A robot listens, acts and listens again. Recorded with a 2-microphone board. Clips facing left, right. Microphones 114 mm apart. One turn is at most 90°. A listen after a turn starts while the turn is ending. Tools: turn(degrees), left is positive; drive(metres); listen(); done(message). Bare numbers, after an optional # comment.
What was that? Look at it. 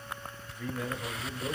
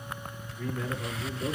turn(-30)
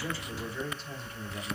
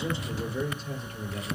# So it is at 135° right.
turn(-90)
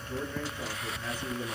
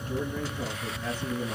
# The man speaking is now 10° right.
turn(-10)
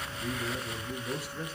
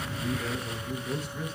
done("Found it: a man speaking, straight ahead, over 4 m away.")